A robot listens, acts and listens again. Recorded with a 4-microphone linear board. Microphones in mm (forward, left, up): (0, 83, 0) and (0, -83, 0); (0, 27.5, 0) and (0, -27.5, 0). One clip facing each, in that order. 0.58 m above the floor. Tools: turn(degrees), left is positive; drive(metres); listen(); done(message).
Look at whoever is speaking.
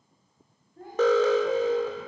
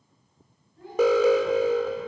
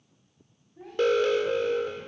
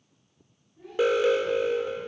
turn(degrees=55)
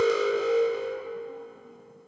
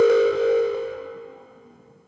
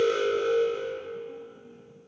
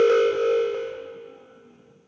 listen()
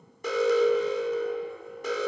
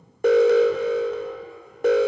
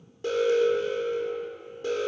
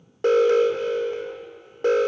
listen()
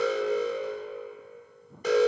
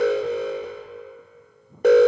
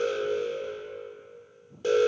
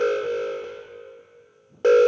done("I heard a child speaking, but can't make it out now. It was about straight ahead or 70° left.")